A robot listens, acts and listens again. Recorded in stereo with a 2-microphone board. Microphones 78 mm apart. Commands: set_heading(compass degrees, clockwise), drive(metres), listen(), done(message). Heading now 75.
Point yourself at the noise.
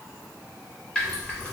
set_heading(45)
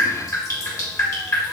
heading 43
set_heading(263)
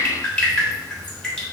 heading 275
set_heading(265)
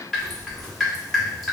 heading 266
done("Found it: dripping, straight ahead, 1 to 2 m away.")